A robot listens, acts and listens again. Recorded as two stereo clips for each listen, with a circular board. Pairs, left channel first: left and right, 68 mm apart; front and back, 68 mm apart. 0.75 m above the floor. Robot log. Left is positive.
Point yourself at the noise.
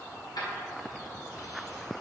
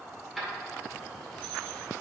note: The keys jangling: 90° left.
cmd yaw +90
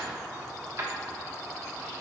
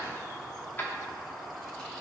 note: The keys jangling is now 55° right.
cmd yaw -55
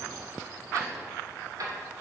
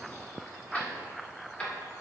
note: The keys jangling is now 70° right.
cmd yaw -70
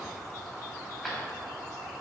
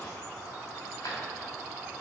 note: The keys jangling is now 10° left.
cmd yaw +10
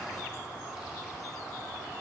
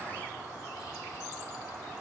cmd idle
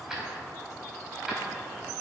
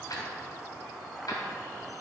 end: Facing the keys jangling.